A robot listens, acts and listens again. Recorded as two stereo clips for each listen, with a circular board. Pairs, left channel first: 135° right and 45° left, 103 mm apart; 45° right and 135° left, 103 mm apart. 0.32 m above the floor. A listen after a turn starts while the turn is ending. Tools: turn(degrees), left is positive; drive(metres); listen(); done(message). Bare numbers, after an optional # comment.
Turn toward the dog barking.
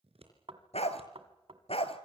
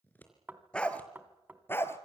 # The dog barking: 110° right.
turn(-110)
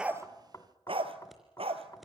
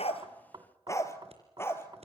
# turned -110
# The dog barking is now 20° left.
turn(20)
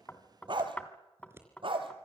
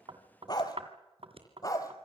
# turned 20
# The dog barking is now 10° left.
turn(10)
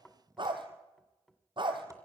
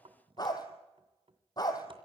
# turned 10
done("Found it: a dog barking, straight ahead.")